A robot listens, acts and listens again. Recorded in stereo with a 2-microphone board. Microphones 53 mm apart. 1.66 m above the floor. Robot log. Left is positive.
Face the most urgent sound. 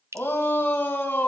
note: The shout: about 40° left or 140° left.
cmd yaw +40
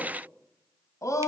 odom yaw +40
note: So it is at 100° left.
cmd yaw +100
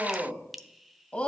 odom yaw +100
note: The shout is now 25° left.
cmd yaw +25
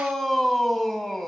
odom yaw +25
end: Found it: a shout, straight ahead, 2 to 4 m away.